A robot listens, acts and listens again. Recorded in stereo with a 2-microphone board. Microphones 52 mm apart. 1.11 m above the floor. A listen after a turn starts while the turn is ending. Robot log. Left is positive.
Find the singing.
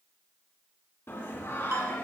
note: The singing: about 60° left or 120° left.
cmd yaw +60
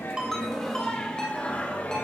note: So it is at 35° left.
cmd yaw +35
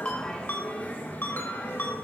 note: The singing is now 50° left.
cmd yaw +50
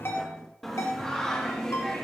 note: The singing is now 10° left.
cmd yaw +10
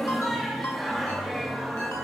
end: Facing the singing, 2 to 4 m away.